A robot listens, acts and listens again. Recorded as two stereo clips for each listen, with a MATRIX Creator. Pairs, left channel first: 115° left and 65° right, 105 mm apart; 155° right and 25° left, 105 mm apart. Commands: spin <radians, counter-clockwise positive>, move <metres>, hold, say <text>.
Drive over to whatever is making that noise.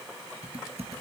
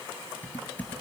spin -1.40
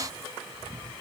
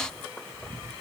move 1.0
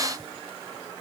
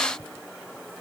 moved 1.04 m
hold
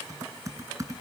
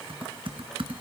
spin -0.17
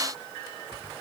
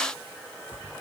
hold
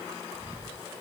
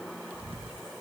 move 1.0
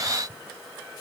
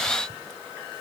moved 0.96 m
hold
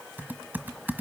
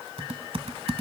move 1.0
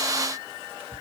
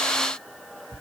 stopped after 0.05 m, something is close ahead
say I am next to the typing on a keyboard.